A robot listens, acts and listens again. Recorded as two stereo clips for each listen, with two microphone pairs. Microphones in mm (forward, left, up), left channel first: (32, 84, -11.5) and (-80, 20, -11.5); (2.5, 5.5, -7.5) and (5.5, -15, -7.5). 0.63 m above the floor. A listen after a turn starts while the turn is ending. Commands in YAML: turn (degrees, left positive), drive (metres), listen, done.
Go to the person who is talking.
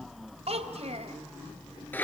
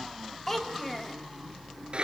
turn: 170
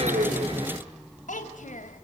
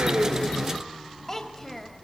turn: 20
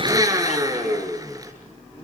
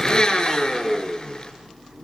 listen: true
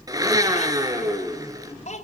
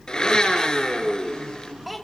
drive: 1.0
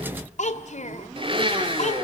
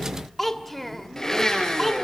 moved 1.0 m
turn: 15
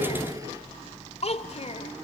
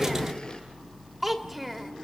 drive: 1.0
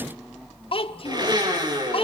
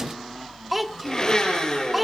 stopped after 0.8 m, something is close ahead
done: "Arrived at the child speaking, straight ahead."